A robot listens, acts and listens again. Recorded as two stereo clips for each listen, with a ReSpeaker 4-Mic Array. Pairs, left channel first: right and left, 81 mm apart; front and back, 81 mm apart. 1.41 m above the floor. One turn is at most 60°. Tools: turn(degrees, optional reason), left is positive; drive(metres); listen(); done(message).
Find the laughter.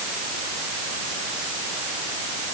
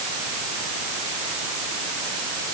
listen()
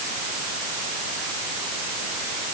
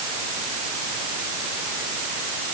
listen()
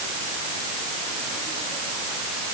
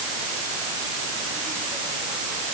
done("I can't make out laughter to turn to.")